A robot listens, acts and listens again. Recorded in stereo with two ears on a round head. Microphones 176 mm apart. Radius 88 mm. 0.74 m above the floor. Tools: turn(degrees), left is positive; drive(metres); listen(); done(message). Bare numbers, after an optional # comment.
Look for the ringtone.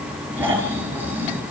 listen()
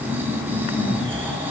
listen()
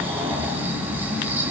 done("I can't make out a ringtone, only snoring.")